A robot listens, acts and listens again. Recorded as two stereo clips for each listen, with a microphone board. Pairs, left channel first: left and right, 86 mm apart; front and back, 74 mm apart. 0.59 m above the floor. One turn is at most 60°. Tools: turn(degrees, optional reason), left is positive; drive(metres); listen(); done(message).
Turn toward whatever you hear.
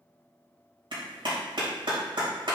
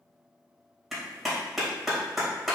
turn(degrees=-60, reason="The clap: 90° right.")
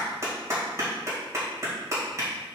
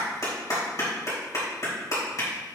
turn(degrees=-35, reason="The clap is now 35° right.")
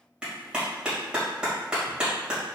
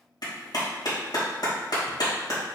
turn(degrees=-10, reason="The clap is now 10° right.")
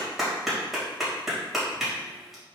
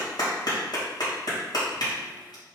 done("Facing the clap, 2 to 4 m away.")